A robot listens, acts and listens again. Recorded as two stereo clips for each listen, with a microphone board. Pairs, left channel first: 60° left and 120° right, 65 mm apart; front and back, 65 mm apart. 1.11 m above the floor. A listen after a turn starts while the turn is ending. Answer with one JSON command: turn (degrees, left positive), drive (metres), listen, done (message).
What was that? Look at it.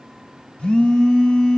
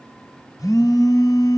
{"turn": -10}
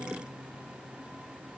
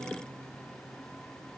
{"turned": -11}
{"listen": true}
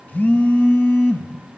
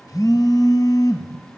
{"done": "Found it: a phone buzzing, straight ahead, 2 to 4 m away."}